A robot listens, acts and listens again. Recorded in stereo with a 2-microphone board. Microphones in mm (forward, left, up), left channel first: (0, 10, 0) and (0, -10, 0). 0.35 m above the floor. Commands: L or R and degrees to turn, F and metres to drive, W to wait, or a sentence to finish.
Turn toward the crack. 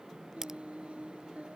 R25
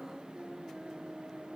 W
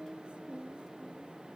I heard a crack, but can't make it out now. It was about straight ahead or 130° right.